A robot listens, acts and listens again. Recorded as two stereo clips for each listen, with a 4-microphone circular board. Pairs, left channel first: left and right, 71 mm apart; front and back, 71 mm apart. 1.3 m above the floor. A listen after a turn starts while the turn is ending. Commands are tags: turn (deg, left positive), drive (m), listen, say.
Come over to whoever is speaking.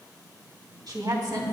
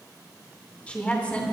<turn deg="-70"/>
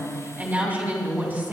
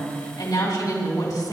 <turn deg="-25"/>
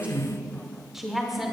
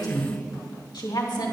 <drive m="1.0"/>
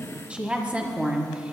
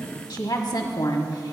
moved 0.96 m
<turn deg="-20"/>
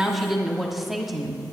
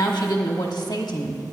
<drive m="1.0"/>
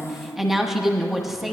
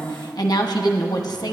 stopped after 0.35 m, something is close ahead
<say>Arrived at the woman speaking, straight ahead.</say>